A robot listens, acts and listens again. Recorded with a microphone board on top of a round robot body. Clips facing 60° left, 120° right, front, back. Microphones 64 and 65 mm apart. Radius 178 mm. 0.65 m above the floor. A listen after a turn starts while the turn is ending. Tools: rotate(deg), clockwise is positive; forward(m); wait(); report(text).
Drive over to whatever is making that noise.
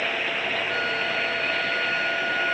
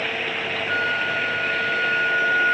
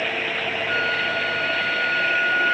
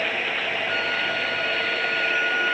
rotate(70)
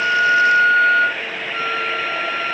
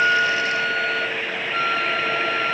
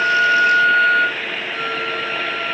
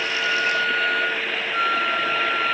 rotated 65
forward(1.0)
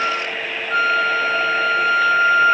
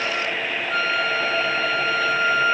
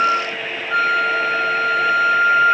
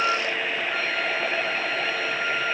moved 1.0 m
forward(1.0)
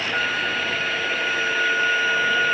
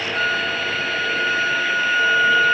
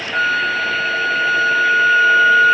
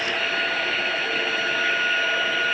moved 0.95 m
forward(1.0)
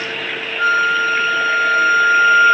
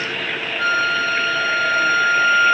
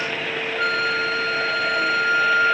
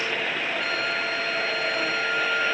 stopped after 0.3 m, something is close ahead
report("I am next to the flute.")